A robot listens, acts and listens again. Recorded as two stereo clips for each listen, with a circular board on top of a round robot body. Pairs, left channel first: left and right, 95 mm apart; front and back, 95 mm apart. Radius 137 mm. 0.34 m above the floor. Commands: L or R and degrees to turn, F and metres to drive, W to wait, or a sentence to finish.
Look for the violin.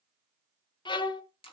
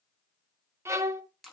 L120
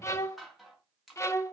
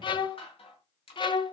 L30
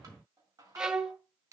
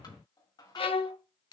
R10
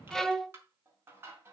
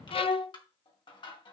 Facing the violin, 1 to 2 m away.